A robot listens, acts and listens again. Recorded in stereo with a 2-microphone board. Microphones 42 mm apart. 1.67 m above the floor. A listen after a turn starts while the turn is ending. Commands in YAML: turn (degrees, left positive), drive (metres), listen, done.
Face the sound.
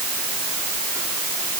listen: true
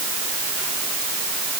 listen: true
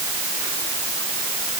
done: "I can't make out anything to turn to."